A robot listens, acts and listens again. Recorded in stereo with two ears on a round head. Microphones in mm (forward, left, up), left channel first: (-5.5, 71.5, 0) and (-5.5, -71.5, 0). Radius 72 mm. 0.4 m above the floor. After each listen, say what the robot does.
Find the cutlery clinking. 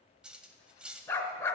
Turn 30° right.
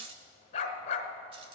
Turn 145° right.
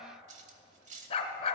Turn 50° right.
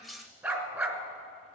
Found it: cutlery clinking, straight ahead.